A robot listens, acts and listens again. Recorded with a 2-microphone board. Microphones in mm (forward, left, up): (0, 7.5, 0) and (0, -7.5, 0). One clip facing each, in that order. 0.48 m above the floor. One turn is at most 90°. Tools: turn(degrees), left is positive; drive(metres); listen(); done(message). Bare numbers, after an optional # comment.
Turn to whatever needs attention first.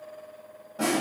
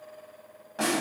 listen()
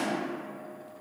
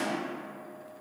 listen()
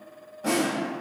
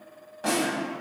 done("I can't make out anything urgent, only a snare drum.")